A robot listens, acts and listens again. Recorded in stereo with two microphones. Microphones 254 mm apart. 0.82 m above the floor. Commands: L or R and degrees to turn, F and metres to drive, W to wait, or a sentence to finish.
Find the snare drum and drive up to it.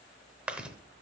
W
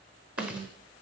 R70
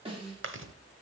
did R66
R25
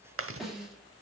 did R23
F1.0
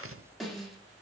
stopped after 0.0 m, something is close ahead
Blocked. The snare drum is further on, straight ahead.